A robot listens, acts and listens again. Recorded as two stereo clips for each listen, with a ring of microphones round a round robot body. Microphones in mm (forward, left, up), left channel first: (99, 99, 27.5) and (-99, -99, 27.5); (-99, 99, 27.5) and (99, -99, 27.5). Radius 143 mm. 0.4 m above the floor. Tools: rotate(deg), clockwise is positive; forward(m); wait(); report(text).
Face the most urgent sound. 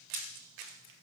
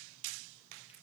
wait()
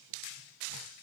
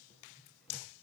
wait()
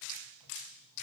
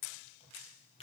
report("I can't make out anything urgent to turn to.")